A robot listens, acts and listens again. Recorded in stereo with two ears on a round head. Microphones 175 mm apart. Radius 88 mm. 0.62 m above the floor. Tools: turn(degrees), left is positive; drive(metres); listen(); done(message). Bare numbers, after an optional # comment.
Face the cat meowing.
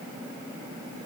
listen()
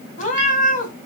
# The cat meowing: about 45° left or 135° left.
turn(45)
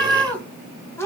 # So it is at 15° left.
turn(15)
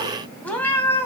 # The cat meowing is now 15° left.
turn(15)
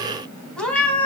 # The cat meowing is now 10° left.
turn(10)
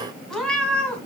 done("Facing the cat meowing.")